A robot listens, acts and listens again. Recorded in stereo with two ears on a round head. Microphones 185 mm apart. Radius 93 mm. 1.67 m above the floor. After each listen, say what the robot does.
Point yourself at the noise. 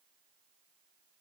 Keep listening.
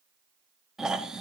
Turn 30° left.
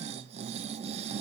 Turn 30° right.
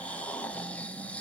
Facing the snoring, under 1 m away.